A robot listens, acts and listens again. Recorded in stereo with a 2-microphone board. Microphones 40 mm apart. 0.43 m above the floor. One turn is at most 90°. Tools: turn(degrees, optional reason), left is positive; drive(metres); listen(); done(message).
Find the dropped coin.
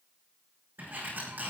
listen()
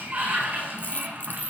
turn(degrees=55, reason="The dropped coin: about 55° left or 125° left.")
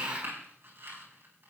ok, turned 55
listen()
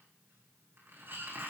done("I heard a dropped coin, but can't make it out now. It was about straight ahead or 70° left.")